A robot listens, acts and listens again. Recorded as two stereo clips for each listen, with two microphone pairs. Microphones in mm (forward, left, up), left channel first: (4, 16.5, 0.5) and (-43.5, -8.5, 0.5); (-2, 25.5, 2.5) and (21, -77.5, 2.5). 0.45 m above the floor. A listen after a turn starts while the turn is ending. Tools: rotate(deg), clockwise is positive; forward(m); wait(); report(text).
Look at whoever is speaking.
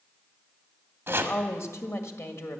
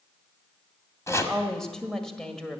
rotate(-20)
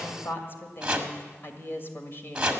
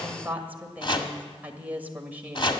report("Facing the woman speaking, 1 to 2 m away.")